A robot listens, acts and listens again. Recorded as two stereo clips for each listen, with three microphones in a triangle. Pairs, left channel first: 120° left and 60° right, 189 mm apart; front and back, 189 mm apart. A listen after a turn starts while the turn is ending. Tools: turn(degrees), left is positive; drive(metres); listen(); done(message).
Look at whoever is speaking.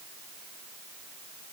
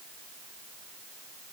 listen()
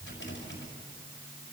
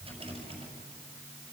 listen()
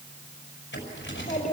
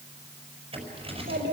turn(degrees=170)
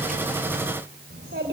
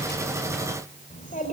turn(degrees=-45)
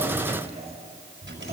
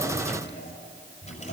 done("Facing the child speaking.")